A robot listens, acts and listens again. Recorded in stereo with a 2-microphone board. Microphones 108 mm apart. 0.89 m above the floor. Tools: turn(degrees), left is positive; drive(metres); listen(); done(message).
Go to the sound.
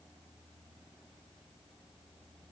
listen()
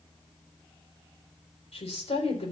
turn(degrees=75)
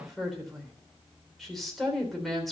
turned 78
drive(metres=1.0)
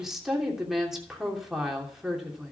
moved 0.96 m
drive(metres=1.0)
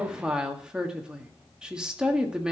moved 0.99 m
turn(degrees=-10)
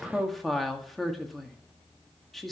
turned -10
drive(metres=1.0)
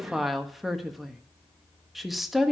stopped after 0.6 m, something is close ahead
done("Arrived at the woman speaking, straight ahead.")